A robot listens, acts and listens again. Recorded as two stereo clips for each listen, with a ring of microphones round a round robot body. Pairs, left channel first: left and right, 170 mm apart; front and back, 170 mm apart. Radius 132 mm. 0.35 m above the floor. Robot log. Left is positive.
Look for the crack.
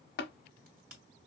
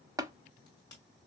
note: The crack: 70° right.
cmd yaw -70
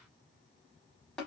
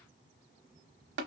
end: Facing where the crack came from. I can't hear it now.